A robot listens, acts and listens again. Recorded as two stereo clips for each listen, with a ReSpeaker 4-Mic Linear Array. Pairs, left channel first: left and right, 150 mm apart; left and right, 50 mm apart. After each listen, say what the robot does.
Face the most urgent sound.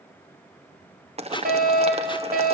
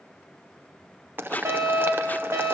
Turn 70° right.
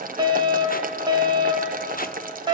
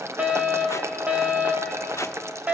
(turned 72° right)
Turn 30° right.
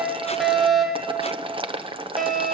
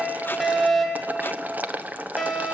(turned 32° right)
Found it: a fire alarm, straight ahead.